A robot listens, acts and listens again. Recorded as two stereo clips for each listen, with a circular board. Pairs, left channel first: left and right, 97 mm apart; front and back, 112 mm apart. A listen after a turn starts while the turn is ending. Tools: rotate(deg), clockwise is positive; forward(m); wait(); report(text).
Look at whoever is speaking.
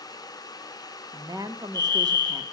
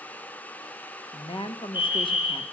rotate(40)
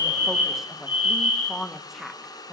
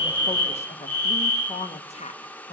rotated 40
report("Facing the woman speaking, 1 to 2 m away.")